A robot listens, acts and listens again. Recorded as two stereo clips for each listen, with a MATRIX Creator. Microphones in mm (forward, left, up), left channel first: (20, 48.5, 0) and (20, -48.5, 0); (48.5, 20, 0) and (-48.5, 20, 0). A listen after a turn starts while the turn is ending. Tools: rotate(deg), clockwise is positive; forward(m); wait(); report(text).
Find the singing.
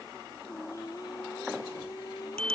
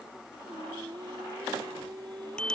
rotate(-140)
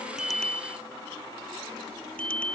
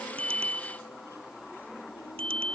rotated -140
wait()
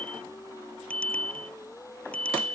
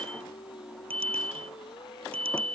rotate(-35)
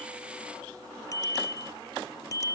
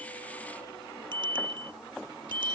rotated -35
wait()
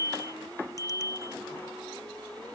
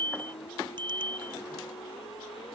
wait()
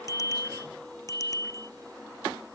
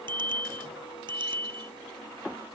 report("I heard singing from this way, but can't make it out now.")